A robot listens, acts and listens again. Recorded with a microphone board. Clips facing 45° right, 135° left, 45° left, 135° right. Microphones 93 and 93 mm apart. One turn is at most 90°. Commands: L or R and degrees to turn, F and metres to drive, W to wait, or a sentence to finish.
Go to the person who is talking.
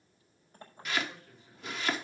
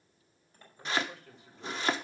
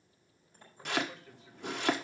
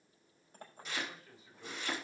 L90
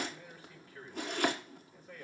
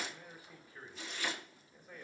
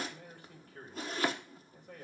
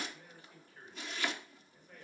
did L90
L55
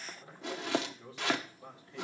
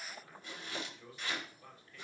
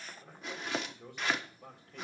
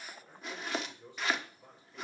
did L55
L15
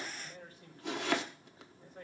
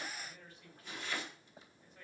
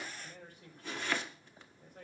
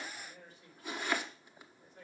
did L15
F1.0
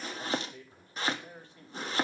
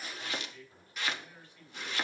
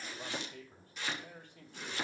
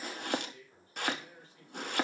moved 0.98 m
L10
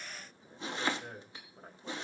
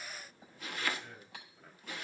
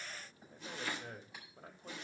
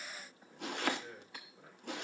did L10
F1.0
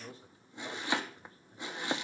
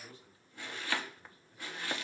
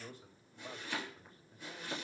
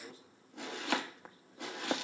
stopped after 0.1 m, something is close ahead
Something is in my way. I am facing the man speaking but have not reached it.